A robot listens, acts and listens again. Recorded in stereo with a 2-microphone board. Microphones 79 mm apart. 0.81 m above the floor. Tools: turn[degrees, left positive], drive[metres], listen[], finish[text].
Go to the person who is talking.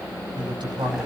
Action: turn[-90]
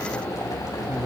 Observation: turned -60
Thought: Nothing new. It was at 30° right.
Action: turn[-30]
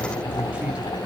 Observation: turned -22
Thought: Nothing new. It was at 10° right.
Action: turn[-10]
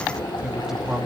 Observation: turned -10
Action: drive[1.0]
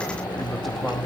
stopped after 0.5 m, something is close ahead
Action: finish[Something is in my way. I am facing the man speaking but have not reached it.]